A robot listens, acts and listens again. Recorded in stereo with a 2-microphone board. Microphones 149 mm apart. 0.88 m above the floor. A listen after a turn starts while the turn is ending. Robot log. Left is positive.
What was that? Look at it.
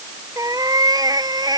note: The cat meowing: about 25° right or 155° right.
cmd yaw -25
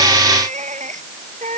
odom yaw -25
note: So it is at 125° right.
cmd yaw -125
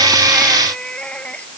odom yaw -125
end: Found it: a cat meowing, straight ahead.